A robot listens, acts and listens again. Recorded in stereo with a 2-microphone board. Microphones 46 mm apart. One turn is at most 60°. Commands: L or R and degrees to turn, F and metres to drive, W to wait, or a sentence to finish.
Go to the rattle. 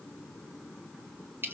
W
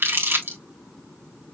W
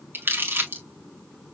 I can't make out a rattle to turn to.